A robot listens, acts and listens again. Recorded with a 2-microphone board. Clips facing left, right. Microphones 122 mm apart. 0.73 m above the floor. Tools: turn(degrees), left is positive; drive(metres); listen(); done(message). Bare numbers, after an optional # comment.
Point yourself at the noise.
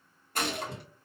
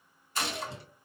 # The gunshot: about 50° left or 130° left.
turn(50)
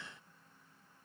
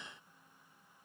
listen()
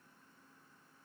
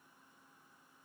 done("I heard a gunshot, but can't make it out now. It was about straight ahead or 80° left.")